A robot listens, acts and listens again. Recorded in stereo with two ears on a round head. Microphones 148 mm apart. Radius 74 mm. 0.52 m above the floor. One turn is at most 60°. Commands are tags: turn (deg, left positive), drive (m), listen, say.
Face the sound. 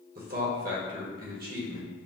<turn deg="-60"/>
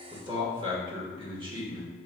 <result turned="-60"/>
<turn deg="-35"/>
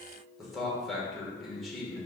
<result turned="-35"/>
<say>Facing the man speaking.</say>